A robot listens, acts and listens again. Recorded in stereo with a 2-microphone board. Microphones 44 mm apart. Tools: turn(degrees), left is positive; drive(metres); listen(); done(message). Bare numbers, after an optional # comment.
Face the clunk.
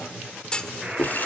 # The clunk: about 20° left or 160° left.
turn(20)
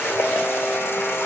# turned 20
listen()
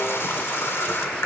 done("I heard a clunk, but can't make it out now. It was about straight ahead or 140° left.")